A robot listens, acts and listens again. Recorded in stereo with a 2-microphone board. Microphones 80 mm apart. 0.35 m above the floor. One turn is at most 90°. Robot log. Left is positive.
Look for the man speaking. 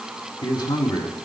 note: The man speaking: about 65° left or 115° left.
cmd yaw +65
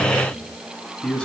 note: So it is at 10° left.
cmd yaw +10
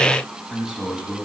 note: The man speaking is now 15° right.
cmd yaw -15
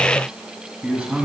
note: The man speaking is now 20° right.
cmd yaw -20
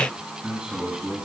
note: The man speaking is now 15° right.
cmd yaw -15
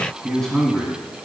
end: Facing the man speaking.